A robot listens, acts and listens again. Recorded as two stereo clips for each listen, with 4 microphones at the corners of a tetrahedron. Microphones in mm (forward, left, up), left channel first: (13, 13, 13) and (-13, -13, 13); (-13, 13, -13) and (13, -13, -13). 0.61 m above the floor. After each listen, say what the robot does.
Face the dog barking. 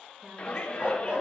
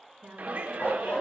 Turn 160° left.
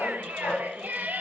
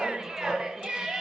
Turn 40° left.
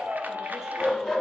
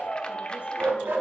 Turn 30° right.
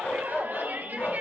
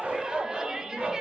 Turn 10° left.
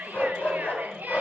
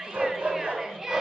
Facing the dog barking.